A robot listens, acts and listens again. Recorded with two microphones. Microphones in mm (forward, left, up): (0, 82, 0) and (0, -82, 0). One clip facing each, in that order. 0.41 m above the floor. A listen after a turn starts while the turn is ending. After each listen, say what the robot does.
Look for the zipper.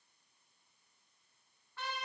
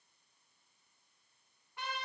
Keep listening.
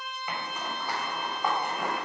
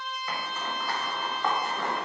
Turn 30° left.
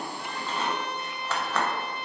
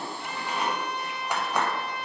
Turn 15° right.
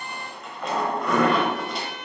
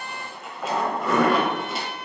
Facing the zipper, under 1 m away.